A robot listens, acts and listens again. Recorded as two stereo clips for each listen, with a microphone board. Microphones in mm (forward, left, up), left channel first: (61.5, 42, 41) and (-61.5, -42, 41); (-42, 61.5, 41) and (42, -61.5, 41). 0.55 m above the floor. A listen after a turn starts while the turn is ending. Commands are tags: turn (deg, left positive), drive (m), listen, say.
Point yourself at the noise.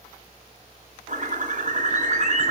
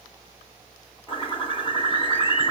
<turn deg="180"/>
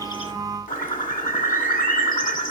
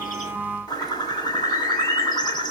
<turn deg="60"/>
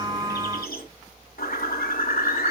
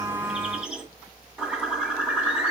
<turn deg="30"/>
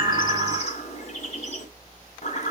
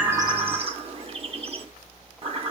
<say>Found it: a bird, straight ahead, 1 to 2 m away.</say>